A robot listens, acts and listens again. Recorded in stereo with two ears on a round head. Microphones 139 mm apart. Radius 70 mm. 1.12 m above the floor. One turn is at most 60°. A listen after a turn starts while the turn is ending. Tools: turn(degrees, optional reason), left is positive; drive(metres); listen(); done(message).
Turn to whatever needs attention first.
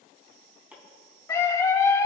turn(degrees=20, reason="The scream: about 20° left or 160° left.")
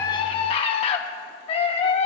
turn(degrees=60, reason="So it is at 140° left.")
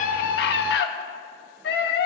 turn(degrees=60, reason="The scream is now 95° left.")
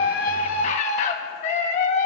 turn(degrees=45, reason="The scream is now 45° left.")
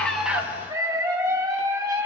turn(degrees=-20, reason="The scream is now 20° right.")
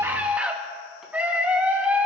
turn(degrees=-10, reason="The scream is now 10° right.")
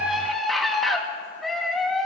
done("Facing the scream, 1 to 2 m away.")